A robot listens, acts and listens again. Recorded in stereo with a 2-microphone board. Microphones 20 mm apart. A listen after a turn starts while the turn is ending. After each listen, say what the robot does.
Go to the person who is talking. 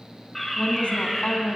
Turn 70° left.
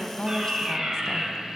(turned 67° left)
Keep listening.
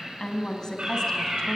Turn 35° left.
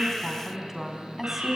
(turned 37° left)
Drive 1.0 m forward.
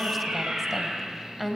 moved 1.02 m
Drive 1.0 m forward.
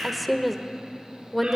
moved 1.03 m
Drive 1.0 m forward.
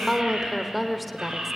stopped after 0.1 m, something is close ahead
Arrived at the woman speaking, straight ahead.